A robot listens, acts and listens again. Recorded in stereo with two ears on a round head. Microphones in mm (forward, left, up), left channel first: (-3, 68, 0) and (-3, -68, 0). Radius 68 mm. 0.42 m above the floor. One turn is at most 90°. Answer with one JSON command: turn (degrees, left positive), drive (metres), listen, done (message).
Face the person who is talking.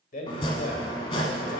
{"turn": 55}
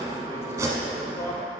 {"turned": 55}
{"listen": true}
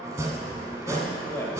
{"turn": 20}
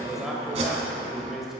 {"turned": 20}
{"done": "Found it: a man speaking, straight ahead."}